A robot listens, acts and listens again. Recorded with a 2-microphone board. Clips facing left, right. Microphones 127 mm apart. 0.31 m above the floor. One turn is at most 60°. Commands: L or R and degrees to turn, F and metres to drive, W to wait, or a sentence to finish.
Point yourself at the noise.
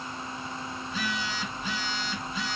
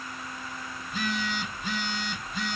R50
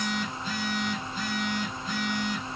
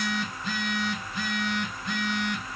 R60
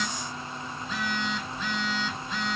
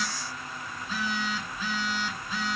Found it: a phone buzzing, straight ahead, under 1 m away.